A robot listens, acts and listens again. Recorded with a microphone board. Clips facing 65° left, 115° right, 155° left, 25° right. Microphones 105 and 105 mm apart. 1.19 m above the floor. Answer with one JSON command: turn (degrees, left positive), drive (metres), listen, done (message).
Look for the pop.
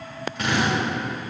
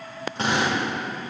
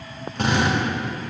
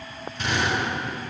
{"listen": true}
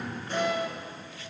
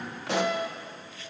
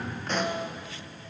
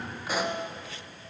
{"turn": -105}
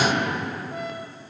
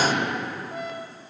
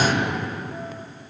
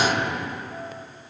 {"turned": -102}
{"done": "I heard a pop from this way, but can't make it out now."}